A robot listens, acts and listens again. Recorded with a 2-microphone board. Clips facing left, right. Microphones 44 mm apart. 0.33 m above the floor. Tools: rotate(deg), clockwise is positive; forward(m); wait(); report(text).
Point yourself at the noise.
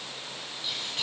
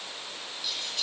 rotate(-25)
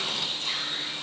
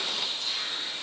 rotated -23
rotate(-130)
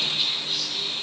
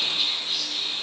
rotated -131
report("Facing the whispering, 2 to 4 m away.")